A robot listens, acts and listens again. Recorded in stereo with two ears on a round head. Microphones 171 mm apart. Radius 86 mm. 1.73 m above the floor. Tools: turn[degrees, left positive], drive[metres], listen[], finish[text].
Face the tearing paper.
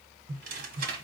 Thought: The tearing paper: about 50° right or 130° right.
Action: turn[-50]
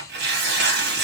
Thought: So it is at 75° right.
Action: turn[-75]
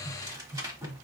Thought: The tearing paper is now 20° right.
Action: turn[-20]
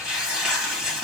Action: finish[Facing the tearing paper.]